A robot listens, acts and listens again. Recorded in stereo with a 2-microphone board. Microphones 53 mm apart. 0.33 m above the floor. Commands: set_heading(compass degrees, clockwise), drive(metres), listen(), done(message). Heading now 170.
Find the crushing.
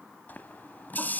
listen()
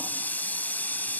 listen()
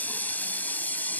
done("I can't make out crushing, only a running tap.")